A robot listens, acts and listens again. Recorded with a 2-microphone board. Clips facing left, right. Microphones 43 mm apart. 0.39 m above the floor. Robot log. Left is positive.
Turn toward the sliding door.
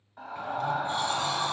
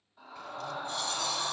note: The sliding door: about 30° left or 150° left.
cmd yaw +30
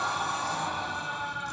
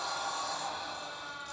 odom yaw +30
note: So it is at 120° left.
cmd yaw +120
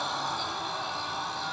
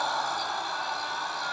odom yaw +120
cmd idle
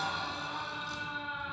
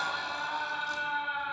cmd idle
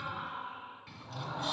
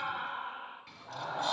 end: Facing the sliding door, 1 to 2 m away.